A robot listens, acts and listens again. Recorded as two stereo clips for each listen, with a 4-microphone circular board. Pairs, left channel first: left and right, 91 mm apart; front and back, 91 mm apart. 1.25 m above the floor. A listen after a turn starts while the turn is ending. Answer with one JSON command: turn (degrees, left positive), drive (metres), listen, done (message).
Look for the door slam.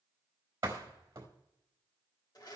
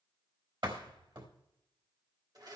{"turn": -145}
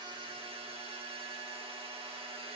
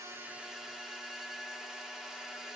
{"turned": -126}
{"turn": -20}
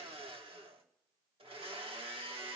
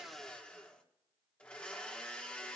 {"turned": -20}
{"done": "Facing where the door slam came from. I can't hear it now."}